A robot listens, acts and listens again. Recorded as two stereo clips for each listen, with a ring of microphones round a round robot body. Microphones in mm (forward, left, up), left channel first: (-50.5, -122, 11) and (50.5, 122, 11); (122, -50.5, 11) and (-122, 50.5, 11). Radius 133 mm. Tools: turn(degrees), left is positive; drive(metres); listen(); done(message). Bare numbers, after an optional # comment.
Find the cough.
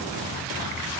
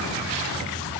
listen()
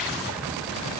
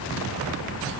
listen()
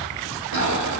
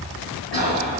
# The cough: 25° left.
turn(25)
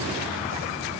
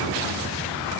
listen()
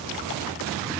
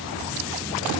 listen()
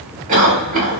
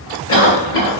# The cough is now 10° left.
turn(10)
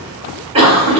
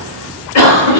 done("Facing the cough, 1 to 2 m away.")